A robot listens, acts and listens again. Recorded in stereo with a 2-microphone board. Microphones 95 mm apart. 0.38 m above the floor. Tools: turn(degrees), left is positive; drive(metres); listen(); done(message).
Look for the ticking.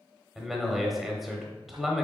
listen()
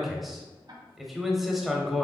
turn(degrees=-45)
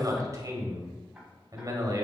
done("Found it: ticking, straight ahead, 1 to 2 m away.")